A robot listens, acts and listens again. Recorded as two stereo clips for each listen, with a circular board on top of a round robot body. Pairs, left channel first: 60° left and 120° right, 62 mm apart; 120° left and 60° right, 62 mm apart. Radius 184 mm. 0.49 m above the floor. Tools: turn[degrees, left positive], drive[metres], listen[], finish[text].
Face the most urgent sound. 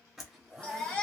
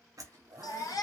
Thought: The baby crying: 130° left.
Action: turn[130]
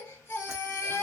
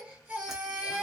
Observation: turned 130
Thought: The baby crying is now 15° left.
Action: turn[15]
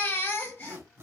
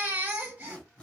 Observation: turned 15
Action: finish[Facing the baby crying, 1 to 2 m away.]